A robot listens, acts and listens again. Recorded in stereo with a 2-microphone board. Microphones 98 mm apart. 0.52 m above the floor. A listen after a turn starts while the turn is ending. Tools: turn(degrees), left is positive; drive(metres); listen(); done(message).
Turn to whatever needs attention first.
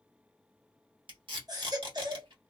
turn(degrees=-45)
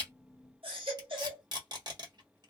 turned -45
turn(degrees=-85)
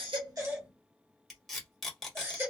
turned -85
turn(degrees=-30)
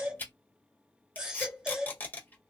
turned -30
turn(degrees=-10)
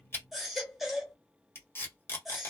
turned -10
done("Found it: a baby crying, straight ahead.")